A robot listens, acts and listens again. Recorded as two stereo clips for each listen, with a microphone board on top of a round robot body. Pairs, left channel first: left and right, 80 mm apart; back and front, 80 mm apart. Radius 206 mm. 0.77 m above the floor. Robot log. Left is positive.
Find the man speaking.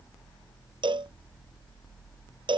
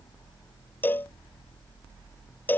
cmd idle
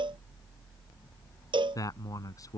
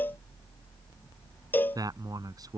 note: The man speaking: 40° left.
cmd yaw +40
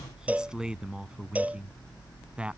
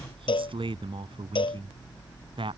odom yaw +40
note: The man speaking is now 10° right.
cmd yaw -10
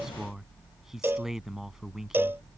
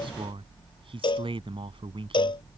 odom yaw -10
end: Facing the man speaking.